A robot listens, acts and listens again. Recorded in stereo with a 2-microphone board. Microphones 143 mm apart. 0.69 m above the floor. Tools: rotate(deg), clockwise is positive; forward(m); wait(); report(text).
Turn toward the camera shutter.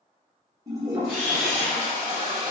rotate(-30)
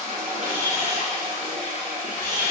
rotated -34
rotate(25)
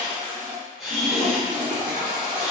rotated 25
report("Facing the camera shutter, 1 to 2 m away.")